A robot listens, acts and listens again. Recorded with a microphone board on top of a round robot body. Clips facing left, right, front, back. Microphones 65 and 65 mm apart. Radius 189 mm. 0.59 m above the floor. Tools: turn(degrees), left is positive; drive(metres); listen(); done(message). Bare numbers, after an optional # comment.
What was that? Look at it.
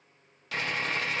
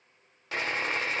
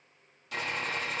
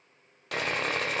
# The sawing: 155° right.
turn(-155)
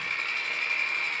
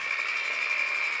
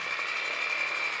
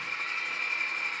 # The sawing is now 10° right.
turn(-10)
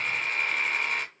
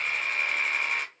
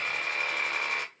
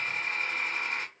done("Facing the sawing.")